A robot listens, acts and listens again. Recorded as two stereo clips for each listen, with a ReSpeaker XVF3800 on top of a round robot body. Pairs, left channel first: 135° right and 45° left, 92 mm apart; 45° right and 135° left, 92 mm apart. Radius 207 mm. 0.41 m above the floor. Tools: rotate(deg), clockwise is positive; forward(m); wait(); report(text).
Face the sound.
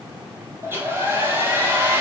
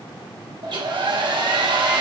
rotate(-110)
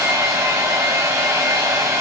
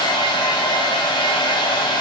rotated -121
rotate(10)
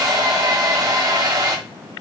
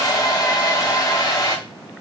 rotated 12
report("Facing the hair dryer.")